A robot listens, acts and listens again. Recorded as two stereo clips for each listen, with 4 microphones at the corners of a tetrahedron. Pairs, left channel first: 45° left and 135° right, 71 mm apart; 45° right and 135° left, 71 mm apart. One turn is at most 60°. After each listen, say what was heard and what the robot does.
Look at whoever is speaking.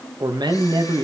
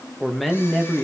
The man speaking: 130° right. Turn 60° right.
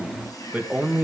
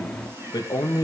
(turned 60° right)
The man speaking is now 65° right. Turn 60° right.
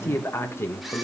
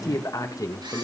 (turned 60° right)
Found it: a man speaking, straight ahead.